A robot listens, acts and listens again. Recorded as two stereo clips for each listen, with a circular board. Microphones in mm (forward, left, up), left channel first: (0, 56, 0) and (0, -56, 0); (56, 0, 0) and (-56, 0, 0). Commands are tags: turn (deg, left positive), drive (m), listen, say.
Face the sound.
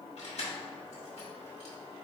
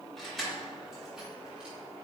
<turn deg="90"/>
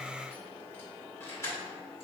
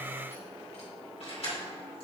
<turn deg="30"/>
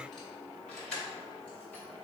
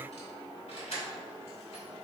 <turn deg="10"/>
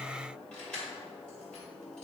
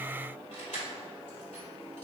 <turn deg="10"/>
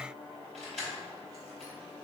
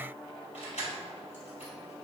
<say>Facing the keys jangling, 2 to 4 m away.</say>